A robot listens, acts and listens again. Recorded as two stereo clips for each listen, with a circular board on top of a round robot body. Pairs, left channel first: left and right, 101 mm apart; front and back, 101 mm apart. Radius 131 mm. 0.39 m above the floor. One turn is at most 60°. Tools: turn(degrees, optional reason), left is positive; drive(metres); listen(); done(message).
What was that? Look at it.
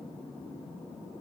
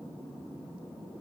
listen()
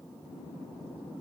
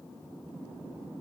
listen()
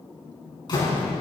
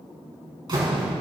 turn(degrees=60, reason="The door slam: 135° left.")
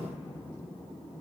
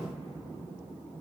turn(degrees=60, reason="Nothing new. It was at 75° left.")
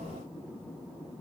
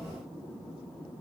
turn(degrees=15, reason="Nothing new. It was at 15° left.")
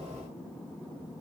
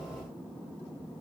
done("Facing where the door slam came from. I can't hear it now.")